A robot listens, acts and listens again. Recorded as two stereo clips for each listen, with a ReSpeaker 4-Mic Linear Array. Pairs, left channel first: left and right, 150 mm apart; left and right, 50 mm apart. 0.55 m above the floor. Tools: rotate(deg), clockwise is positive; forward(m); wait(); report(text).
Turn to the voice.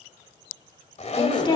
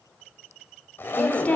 rotate(-30)
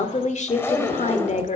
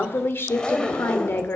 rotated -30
rotate(-115)
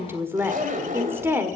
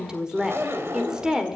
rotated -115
rotate(20)
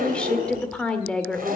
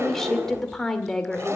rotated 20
report("Facing the woman speaking.")